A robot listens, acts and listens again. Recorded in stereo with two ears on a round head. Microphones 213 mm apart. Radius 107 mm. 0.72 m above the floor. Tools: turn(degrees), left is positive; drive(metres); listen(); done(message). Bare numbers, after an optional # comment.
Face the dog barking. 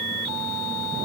listen()
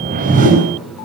listen()
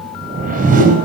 done("I can't make out a dog barking, only a whoosh.")